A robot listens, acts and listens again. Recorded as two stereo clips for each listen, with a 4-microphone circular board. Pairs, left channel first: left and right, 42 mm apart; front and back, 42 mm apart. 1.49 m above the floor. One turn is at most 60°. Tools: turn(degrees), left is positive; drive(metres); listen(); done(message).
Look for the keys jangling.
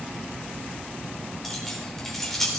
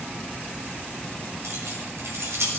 turn(degrees=60)
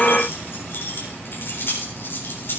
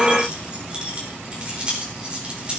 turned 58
turn(degrees=60)
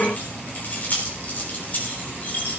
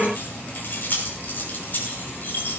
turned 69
turn(degrees=45)
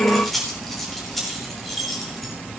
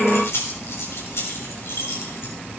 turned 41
done("Facing the keys jangling, 2 to 4 m away.")